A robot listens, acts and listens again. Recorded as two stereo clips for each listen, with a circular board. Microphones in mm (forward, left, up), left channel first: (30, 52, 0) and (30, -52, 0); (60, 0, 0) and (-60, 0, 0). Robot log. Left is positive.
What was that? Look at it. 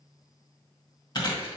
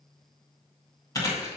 note: The chewing: 55° left.
cmd yaw +55
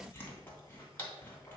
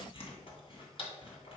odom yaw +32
note: The chewing is now 20° left.
cmd yaw +20
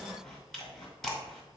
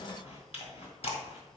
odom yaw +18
end: Facing the chewing.